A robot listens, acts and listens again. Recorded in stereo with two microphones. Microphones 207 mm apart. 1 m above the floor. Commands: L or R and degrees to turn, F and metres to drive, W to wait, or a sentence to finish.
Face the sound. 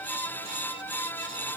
W
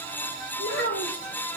L75
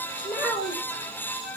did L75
Facing the child speaking.